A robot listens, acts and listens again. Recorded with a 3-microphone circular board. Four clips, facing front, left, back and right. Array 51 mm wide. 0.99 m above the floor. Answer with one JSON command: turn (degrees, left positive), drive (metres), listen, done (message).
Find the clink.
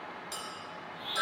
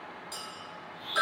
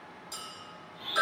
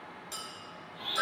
{"turn": -20}
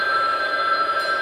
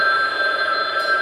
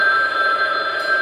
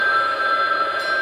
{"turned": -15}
{"listen": true}
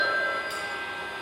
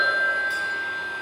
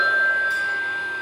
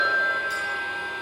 {"listen": true}
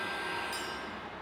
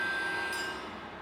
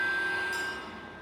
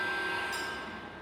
{"done": "Facing where the clink came from. I can't hear it now."}